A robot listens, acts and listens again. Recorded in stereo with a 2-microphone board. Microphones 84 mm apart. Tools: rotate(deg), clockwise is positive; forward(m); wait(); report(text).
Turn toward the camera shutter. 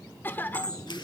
rotate(-65)
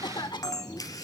rotate(-45)
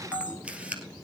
rotate(15)
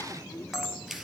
report("Found it: a camera shutter, straight ahead.")